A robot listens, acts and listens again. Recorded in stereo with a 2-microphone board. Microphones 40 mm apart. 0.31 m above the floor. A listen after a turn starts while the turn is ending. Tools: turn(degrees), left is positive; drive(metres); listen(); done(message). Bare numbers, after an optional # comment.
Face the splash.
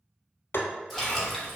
turn(30)
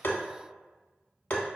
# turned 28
listen()
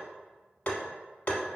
done("I heard a splash, but can't make it out now. It was about 25° right or 145° left.")